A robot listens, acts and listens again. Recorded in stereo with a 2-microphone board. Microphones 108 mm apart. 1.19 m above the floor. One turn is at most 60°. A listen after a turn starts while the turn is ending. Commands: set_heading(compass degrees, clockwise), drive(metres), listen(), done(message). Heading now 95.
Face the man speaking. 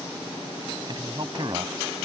set_heading(140)
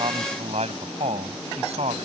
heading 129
set_heading(189)
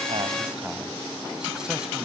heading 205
set_heading(220)
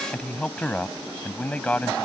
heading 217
set_heading(207)
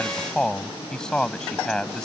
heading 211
done("Found it: a man speaking, straight ahead.")